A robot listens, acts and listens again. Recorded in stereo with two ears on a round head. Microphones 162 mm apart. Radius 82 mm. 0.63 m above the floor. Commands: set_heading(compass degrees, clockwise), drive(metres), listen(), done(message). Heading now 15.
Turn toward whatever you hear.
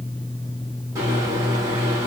set_heading(35)
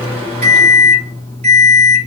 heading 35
set_heading(170)
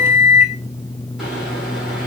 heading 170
done("Facing the microwave.")